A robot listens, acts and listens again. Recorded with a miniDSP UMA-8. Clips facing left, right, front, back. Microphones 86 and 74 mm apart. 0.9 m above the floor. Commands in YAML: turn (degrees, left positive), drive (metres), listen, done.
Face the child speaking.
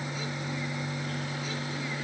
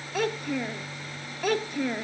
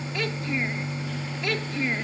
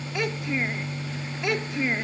turn: -110
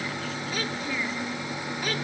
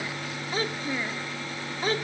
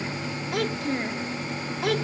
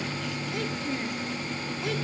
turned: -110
turn: -30
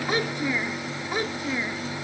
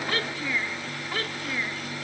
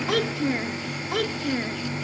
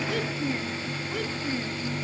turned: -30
turn: 15
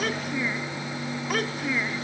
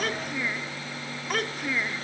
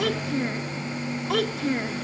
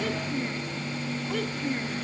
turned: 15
done: "Facing the child speaking."